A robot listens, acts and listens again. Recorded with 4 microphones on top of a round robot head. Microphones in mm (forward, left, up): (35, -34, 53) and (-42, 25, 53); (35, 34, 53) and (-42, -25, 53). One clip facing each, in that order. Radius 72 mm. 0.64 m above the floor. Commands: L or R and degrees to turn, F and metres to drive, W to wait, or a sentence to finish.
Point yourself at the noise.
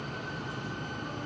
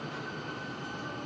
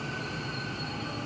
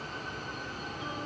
W
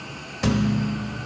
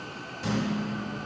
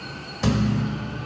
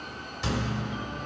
R10
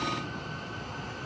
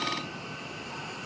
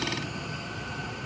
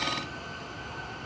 Facing where the thud came from. I can't hear it now.